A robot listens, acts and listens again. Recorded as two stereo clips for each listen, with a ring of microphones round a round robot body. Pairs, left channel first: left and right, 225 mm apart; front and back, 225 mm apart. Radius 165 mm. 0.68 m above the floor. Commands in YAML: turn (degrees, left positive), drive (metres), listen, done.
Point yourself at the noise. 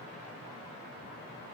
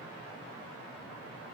listen: true
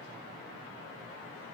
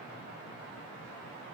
listen: true
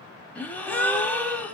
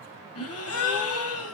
done: "Found it: a gasp, straight ahead."